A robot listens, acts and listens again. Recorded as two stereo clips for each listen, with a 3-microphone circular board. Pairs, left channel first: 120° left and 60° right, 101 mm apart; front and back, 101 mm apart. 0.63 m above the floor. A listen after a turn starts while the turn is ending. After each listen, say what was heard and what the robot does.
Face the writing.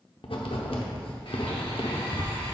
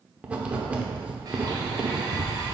The writing: 105° left. Turn 105° left.
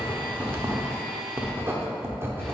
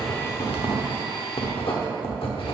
Found it: writing, straight ahead, under 1 m away.